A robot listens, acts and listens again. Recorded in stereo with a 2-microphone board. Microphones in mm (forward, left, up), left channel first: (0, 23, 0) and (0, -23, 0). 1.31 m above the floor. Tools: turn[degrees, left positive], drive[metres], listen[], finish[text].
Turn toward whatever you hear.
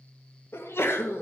Thought: The sneeze: about 60° left or 120° left.
Action: turn[60]
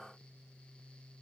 Action: listen[]
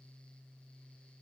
Action: finish[I heard a sneeze, but can't make it out now. It was about straight ahead or 60° left.]